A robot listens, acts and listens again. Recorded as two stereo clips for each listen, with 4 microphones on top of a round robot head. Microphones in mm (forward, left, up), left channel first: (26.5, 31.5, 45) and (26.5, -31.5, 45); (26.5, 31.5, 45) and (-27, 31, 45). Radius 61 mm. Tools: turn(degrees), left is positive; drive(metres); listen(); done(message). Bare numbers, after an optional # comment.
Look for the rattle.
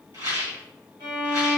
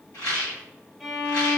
# The rattle: 60° right.
turn(-60)
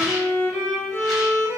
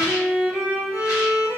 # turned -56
listen()
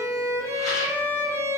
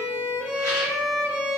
listen()
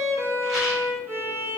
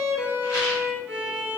done("Facing where the rattle came from. I can't hear it now.")